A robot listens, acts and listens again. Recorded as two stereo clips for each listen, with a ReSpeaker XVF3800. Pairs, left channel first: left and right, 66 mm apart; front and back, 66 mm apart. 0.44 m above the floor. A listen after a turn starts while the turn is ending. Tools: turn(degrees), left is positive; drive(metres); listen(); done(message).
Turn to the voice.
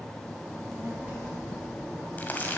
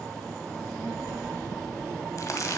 turn(degrees=-15)
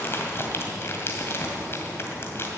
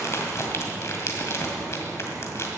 listen()
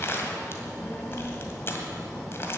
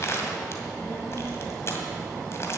turn(degrees=45)
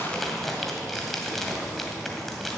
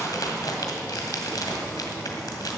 listen()
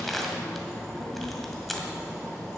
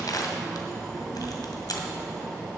done("Facing the child speaking.")